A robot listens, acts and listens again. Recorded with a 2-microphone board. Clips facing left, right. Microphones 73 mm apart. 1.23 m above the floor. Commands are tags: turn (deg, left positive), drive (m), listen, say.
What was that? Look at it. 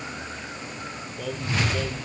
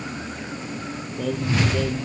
<turn deg="30"/>
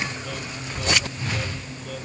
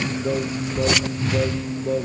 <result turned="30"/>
<turn deg="-30"/>
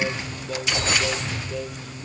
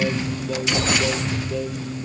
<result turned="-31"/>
<say>Facing the singing.</say>